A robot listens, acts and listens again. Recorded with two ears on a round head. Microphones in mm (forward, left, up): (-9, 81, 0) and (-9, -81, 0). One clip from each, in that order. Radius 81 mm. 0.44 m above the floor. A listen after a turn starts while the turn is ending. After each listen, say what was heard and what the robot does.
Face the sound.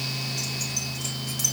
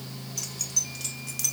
The keys jangling: about 25° right or 155° right. Turn 25° right.
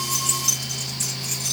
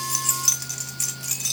The keys jangling: about 35° right or 145° right. Turn 35° right.
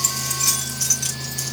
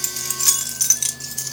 So it is at 135° right. Turn 135° right.
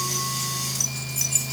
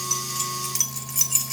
The keys jangling is now 35° right. Turn 35° right.
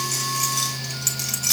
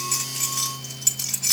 Found it: keys jangling, straight ahead, 1 to 2 m away.